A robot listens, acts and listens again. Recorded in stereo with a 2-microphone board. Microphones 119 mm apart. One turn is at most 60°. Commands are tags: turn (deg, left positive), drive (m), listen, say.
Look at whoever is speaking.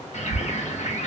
<listen/>
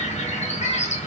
<listen/>
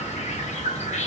<say>I can't make out anyone speaking, only a bird.</say>